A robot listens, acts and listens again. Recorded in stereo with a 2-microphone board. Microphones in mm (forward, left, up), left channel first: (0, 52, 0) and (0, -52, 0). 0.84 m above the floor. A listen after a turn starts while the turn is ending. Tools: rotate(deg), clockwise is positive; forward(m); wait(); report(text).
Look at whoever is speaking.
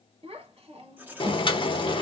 rotate(70)
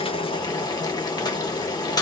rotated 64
wait()
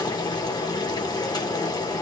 wait()
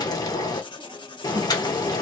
report("I heard a child speaking, but can't make it out now. It was about 10° right or 45° right.")